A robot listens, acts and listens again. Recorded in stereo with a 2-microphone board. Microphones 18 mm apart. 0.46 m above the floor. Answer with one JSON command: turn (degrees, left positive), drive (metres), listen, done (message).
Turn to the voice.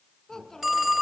{"turn": 25}
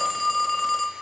{"listen": true}
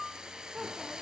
{"done": "Found it: a child speaking, straight ahead."}